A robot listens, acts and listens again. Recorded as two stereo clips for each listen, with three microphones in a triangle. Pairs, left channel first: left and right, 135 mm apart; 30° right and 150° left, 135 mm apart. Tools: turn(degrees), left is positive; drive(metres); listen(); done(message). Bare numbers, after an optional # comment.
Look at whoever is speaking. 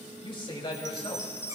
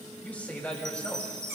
# The man speaking: 45° left.
turn(45)
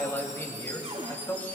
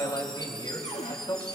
# The man speaking is now 20° left.
turn(20)
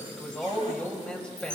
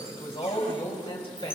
# The man speaking is now 10° left.
turn(10)
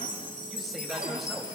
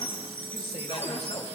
listen()
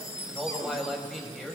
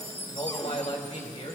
done("Found it: a man speaking, straight ahead.")